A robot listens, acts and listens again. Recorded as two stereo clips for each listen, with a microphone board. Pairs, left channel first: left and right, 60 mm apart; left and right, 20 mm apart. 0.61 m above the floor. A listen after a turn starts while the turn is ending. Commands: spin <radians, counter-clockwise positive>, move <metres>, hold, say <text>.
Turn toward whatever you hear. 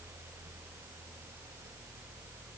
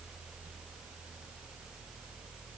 hold
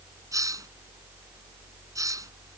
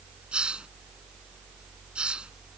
spin -1.22
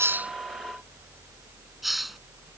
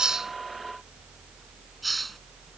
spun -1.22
say Found it: a hiss, straight ahead.